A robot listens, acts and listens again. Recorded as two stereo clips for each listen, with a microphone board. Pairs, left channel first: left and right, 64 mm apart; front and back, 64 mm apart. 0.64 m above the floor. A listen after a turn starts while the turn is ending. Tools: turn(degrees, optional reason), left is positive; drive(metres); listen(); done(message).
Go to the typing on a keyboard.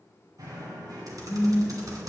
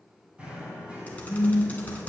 turn(degrees=-65, reason="The typing on a keyboard: 65° right.")
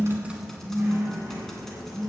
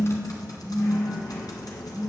drive(metres=1.0)
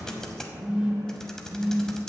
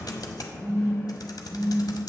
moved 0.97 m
turn(degrees=10, reason="The typing on a keyboard is now 10° left.")
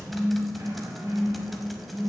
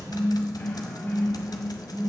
listen()
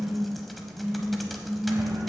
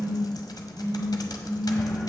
drive(metres=1.0)
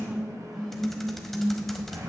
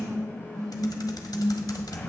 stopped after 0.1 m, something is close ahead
done("I am next to the typing on a keyboard.")